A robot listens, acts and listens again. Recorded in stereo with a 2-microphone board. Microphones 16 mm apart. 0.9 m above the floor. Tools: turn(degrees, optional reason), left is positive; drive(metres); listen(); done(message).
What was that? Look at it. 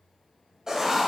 turn(degrees=-30, reason="The writing: about 30° right or 150° right.")
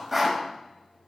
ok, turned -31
done("Facing the writing.")